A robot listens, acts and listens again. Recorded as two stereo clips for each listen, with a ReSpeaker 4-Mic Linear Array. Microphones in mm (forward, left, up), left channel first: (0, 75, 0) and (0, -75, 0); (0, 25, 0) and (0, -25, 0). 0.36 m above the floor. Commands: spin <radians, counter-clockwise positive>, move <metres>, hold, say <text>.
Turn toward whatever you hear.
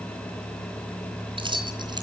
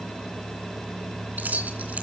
spin -0.61
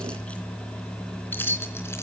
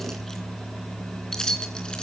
spin 0.26
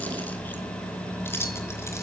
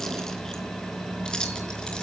spin 0.26
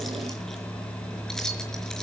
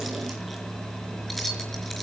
say Facing the keys jangling.